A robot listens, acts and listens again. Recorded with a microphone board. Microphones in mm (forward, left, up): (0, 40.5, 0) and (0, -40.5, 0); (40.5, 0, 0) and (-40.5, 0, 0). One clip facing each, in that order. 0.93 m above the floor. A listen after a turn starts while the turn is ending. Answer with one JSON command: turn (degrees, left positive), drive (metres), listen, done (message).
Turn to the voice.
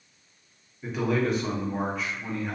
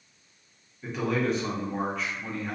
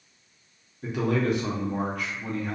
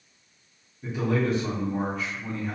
{"done": "Found it: a man speaking, straight ahead."}